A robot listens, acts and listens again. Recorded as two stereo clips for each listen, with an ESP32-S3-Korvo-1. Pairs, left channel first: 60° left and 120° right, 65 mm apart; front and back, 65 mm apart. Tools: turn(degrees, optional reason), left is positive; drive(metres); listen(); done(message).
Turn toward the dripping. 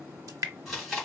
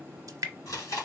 turn(degrees=-150, reason="The dripping: 150° right.")
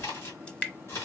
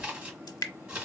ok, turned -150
turn(degrees=-15, reason="The dripping is now 15° right.")
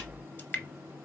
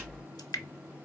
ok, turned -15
done("Found it: dripping, straight ahead.")